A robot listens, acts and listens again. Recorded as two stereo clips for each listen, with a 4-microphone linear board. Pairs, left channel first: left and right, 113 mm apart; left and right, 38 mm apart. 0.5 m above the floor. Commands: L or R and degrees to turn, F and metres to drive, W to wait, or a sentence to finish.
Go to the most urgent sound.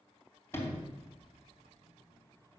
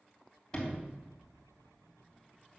W
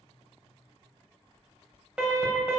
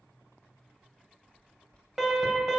R30
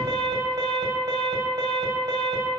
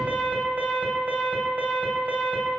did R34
R135
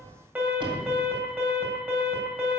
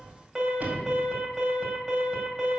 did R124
R10
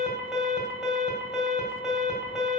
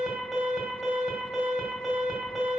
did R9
F1.0
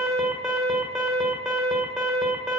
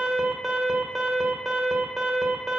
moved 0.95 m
F1.0
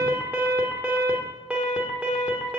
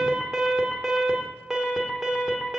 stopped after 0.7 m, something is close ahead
R15
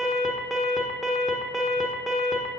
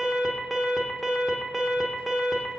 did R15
Arrived at the alarm, straight ahead.